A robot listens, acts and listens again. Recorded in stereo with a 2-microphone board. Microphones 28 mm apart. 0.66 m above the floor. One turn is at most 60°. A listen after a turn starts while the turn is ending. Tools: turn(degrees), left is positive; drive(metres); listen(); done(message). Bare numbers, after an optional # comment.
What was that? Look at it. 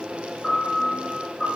# The piano: about 20° left or 160° left.
turn(20)
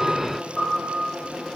done("Found it: a piano, straight ahead, 1 to 2 m away.")